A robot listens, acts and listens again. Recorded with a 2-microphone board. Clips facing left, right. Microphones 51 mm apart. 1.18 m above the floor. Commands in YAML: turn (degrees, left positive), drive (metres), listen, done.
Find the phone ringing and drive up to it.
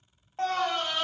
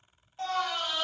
listen: true
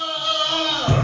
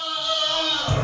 listen: true
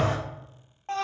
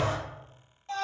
done: "I can't make out a phone ringing, only a scream."